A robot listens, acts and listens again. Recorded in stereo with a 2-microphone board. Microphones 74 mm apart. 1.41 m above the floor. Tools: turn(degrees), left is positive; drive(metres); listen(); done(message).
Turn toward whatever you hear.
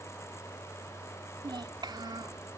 turn(degrees=-90)
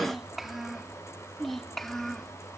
done("Facing the child speaking.")